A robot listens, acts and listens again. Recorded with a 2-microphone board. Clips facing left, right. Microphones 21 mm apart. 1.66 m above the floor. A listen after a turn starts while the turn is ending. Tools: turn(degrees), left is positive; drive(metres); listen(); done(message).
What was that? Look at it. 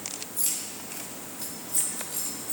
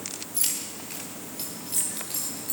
turn(degrees=-70)
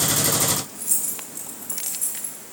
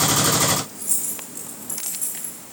done("Facing the keys jangling, over 4 m away.")